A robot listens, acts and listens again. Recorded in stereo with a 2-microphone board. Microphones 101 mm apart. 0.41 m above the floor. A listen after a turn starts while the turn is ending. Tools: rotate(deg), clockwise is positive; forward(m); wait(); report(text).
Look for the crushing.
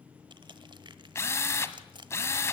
rotate(50)
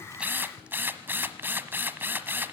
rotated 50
wait()
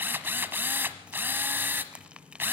rotate(15)
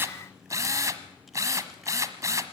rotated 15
wait()
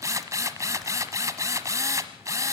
wait()
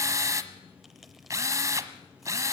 report("I heard crushing from this way, but can't make it out now.")